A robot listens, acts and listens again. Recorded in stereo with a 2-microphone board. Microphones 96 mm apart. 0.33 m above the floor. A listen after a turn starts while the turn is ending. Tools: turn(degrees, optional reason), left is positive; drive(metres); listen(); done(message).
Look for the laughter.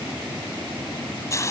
listen()
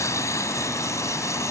listen()
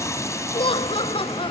turn(degrees=65, reason="The laughter: about 65° left or 115° left.")
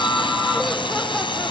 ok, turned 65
listen()
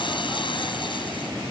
listen()
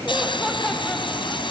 done("I heard laughter, but can't make it out now. It was about straight ahead or 50° left.")